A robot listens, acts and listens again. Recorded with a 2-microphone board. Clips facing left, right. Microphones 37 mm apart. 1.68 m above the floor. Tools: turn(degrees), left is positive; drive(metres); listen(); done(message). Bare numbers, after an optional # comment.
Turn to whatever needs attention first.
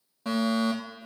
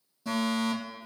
# The fire alarm: about 45° left or 135° left.
turn(45)
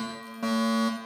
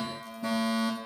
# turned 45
# So it is at 90° left.
turn(90)
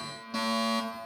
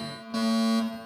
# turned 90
done("Facing the fire alarm, over 4 m away.")